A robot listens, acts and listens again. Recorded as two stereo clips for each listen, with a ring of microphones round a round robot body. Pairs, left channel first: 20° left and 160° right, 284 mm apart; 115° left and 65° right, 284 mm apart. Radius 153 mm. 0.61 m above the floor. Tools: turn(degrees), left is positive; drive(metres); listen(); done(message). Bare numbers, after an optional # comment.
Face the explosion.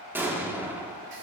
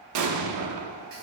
# The explosion: 75° right.
turn(-75)
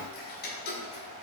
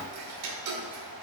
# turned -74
done("I heard an explosion from this way, but can't make it out now.")